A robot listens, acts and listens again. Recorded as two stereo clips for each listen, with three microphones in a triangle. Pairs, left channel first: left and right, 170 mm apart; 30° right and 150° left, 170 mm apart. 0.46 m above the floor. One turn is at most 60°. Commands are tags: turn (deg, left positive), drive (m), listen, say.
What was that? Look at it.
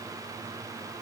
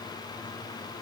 <listen/>
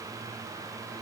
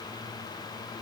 <listen/>
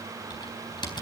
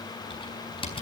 <turn deg="25"/>
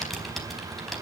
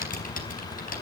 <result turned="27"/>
<say>Facing the typing on a keyboard.</say>